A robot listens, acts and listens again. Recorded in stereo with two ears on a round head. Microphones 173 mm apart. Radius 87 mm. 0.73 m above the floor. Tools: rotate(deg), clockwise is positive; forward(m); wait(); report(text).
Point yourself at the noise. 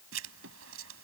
rotate(90)
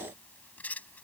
rotate(-10)
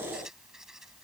report("Found it: writing, straight ahead.")